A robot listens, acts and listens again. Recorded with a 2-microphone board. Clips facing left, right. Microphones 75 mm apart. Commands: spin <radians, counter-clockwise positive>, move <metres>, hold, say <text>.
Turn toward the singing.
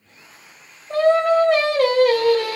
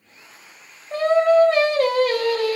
spin 1.22
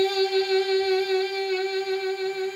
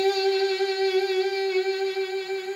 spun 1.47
spin -0.17
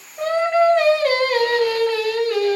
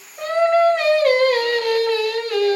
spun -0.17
say Facing the singing.